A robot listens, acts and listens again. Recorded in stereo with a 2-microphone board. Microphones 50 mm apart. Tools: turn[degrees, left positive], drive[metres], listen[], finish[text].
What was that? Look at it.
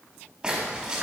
Thought: The splash: about 15° right or 165° right.
Action: turn[-15]
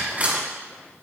Thought: So it is at 150° right.
Action: turn[-150]
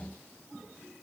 Action: finish[Facing where the splash came from. I can't hear it now.]